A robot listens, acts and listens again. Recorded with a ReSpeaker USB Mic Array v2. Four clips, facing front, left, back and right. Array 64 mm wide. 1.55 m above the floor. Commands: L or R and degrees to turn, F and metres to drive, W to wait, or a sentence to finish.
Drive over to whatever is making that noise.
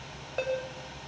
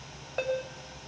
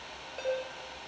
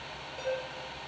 L55
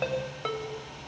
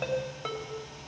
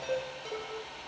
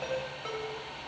L20
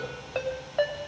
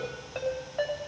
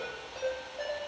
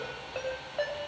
F1.0
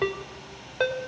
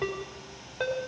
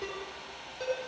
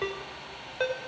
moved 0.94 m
R10
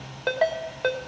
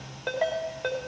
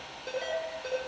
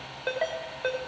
F1.0
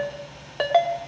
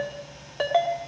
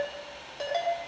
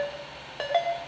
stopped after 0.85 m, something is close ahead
I am next to the ringtone.